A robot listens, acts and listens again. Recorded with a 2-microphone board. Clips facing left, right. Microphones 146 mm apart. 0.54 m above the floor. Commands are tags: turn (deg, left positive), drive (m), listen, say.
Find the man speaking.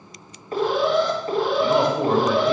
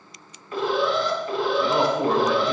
<turn deg="30"/>
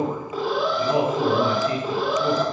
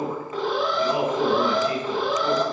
<turn deg="150"/>
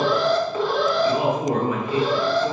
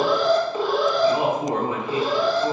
<turn deg="-30"/>
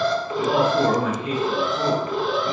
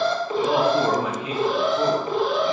<turn deg="-10"/>
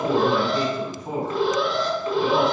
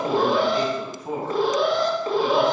<say>Found it: a man speaking, straight ahead, 2 to 4 m away.</say>